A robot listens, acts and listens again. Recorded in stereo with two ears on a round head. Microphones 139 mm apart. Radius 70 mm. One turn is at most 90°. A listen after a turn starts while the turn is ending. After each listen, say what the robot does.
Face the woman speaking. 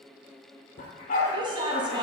Turn 30° right.
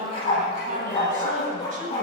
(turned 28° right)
Turn 90° right.
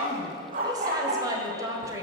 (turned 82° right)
Turn 20° right.
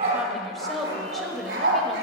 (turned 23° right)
Found it: a woman speaking, straight ahead.